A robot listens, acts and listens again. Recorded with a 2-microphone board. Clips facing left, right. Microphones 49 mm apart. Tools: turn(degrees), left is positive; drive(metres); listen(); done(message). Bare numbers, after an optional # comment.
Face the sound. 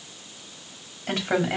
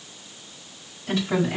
# The woman speaking: about 55° left or 125° left.
turn(55)
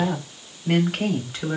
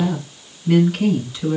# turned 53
# So it is at 70° left.
turn(70)
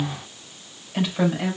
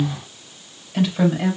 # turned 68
done("Facing the woman speaking.")